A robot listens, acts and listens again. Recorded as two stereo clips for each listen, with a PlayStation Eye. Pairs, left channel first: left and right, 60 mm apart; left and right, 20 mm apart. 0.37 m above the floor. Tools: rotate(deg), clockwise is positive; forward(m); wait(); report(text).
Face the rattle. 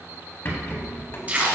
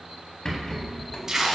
rotate(-40)
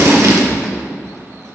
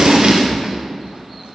wait()
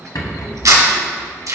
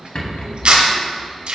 rotate(-100)
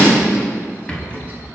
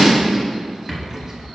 rotate(-20)
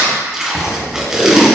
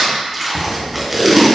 report("Facing the rattle.")